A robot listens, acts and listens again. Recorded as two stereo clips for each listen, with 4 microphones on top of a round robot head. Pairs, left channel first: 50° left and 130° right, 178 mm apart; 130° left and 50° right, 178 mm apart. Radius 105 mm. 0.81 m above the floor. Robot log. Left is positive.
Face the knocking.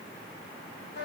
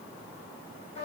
cmd idle
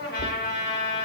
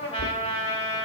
note: The knocking: 110° left.
cmd yaw +110
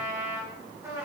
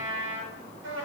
cmd idle
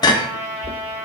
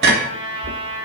note: The knocking is now 15° right.
cmd yaw -15
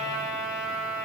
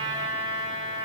cmd idle
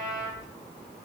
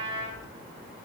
cmd idle
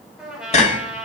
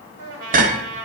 end: Facing the knocking, 1 to 2 m away.